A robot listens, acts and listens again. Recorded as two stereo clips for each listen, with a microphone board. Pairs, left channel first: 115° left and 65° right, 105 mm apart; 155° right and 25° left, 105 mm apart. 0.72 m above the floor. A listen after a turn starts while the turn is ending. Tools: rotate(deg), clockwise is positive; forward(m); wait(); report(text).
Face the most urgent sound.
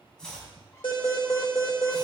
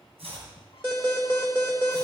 rotate(-85)
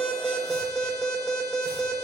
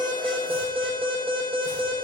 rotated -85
rotate(-10)
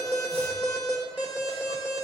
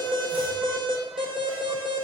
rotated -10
report("Found it: an alarm, straight ahead, 2 to 4 m away.")